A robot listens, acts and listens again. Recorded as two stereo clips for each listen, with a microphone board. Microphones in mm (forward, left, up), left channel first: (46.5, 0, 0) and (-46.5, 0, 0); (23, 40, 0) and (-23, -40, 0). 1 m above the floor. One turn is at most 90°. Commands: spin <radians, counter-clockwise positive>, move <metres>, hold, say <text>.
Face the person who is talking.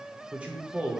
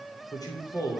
spin 1.57
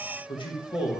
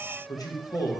spin 0.35
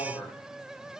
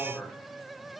say Found it: a man speaking, straight ahead.